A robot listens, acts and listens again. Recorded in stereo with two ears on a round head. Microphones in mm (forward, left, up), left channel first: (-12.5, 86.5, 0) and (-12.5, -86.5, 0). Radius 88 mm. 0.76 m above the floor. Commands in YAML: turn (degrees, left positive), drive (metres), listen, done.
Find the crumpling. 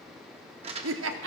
turn: -30
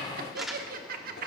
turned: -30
done: "Facing the crumpling, 1 to 2 m away."